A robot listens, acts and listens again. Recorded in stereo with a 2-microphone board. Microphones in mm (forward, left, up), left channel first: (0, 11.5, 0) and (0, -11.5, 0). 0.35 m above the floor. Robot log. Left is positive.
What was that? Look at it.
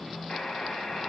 note: The buzzer: about 35° left or 145° left.
cmd yaw +35
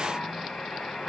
note: So it is at 105° left.
cmd yaw +105
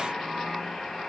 note: The buzzer is now 25° left.
cmd yaw +25
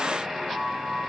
note: The buzzer is now 15° right.
cmd yaw -15
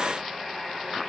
end: Facing the buzzer, 1 to 2 m away.